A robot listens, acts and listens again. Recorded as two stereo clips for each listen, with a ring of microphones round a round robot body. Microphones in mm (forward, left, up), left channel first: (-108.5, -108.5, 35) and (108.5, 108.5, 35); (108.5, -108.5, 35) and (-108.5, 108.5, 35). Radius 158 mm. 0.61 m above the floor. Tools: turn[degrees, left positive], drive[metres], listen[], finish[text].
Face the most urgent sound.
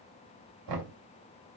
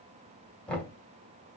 Action: listen[]
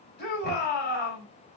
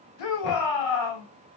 Thought: The shout: 75° right.
Action: turn[-75]
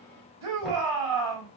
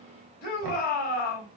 Thought: The shout is now 15° left.
Action: turn[15]
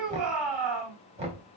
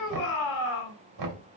Action: finish[Found it: a shout, straight ahead.]